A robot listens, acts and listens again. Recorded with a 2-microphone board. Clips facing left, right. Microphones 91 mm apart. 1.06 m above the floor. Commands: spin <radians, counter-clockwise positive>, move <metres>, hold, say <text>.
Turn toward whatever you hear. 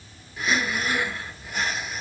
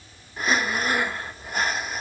spin -0.79
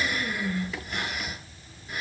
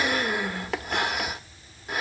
spin -1.57
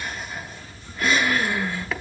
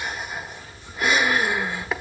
spin -0.26
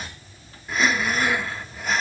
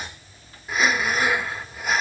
say Found it: breathing, straight ahead, 1 to 2 m away.